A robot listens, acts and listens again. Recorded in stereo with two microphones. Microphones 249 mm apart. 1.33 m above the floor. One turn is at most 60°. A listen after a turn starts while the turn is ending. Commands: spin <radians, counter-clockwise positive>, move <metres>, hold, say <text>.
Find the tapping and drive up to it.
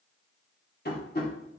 spin 0.79
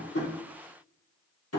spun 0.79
spin 1.05
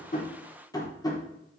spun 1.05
spin 0.26
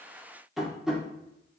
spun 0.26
move 1.0
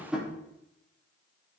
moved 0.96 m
move 1.0
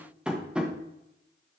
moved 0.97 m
move 1.0
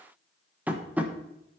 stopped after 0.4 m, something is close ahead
say I am next to the tapping.